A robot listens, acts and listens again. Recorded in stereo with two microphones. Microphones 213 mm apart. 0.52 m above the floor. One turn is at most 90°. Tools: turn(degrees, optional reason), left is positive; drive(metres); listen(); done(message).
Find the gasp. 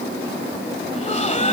turn(degrees=35, reason="The gasp: about 35° left or 145° left.")
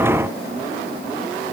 listen()
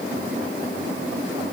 done("I heard a gasp, but can't make it out now. It was about straight ahead or 110° left.")